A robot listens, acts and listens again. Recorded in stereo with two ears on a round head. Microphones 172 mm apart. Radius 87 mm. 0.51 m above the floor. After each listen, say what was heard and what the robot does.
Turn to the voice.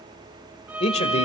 The man speaking: about 35° left or 145° left. Turn 35° left.
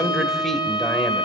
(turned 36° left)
Found it: a man speaking, straight ahead.